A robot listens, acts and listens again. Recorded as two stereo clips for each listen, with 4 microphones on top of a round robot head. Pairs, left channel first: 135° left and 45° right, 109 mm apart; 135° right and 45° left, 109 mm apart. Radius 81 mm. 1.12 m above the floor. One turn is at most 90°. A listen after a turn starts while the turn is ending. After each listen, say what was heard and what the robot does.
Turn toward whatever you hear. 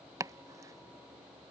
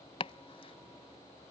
The chopping: 105° right. Turn 90° right.
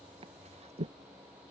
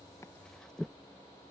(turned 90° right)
The chopping is now 50° right. Turn 50° right.
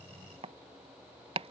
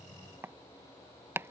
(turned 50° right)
The chopping is now 20° right. Turn 20° right.
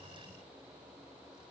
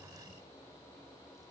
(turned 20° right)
Keep listening.
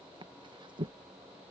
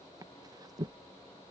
Found it: chopping, straight ahead.